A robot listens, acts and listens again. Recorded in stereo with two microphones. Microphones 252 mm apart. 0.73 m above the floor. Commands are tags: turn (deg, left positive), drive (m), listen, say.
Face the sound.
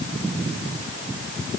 <listen/>
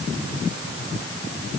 <listen/>
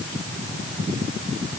<say>I can't make out anything.</say>